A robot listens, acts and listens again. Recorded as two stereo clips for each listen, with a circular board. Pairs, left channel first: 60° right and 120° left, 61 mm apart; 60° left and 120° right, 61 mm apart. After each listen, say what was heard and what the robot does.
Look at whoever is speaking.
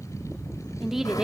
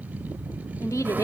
The woman speaking: 40° left. Turn 40° left.
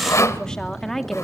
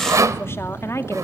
The woman speaking is now 25° left. Turn 25° left.
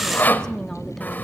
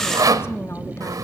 The woman speaking is now 20° left. Turn 20° left.
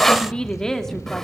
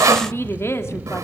The woman speaking is now 20° left. Turn 20° left.
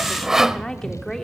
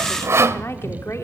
The woman speaking is now 20° left. Turn 20° left.
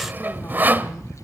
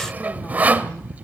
Keep listening.
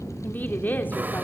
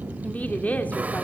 Facing the woman speaking, 2 to 4 m away.